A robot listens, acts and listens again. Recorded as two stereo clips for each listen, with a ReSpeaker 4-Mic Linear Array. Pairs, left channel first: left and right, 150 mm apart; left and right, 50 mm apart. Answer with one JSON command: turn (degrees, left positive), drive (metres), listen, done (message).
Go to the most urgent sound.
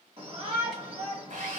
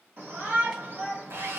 {"turn": -40}
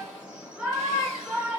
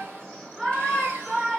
{"turn": -10}
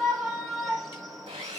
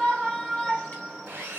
{"drive": 1.0}
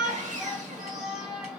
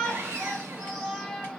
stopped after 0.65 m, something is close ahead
{"done": "I am next to the shout."}